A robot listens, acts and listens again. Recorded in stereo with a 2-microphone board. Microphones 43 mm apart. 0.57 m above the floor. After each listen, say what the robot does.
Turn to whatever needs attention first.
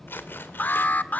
Turn 40° left.
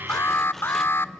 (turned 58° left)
Turn 75° left.
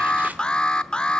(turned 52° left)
Turn 20° left.
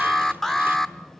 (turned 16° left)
Turn 10° left.
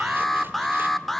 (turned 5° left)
Found it: an alarm, straight ahead.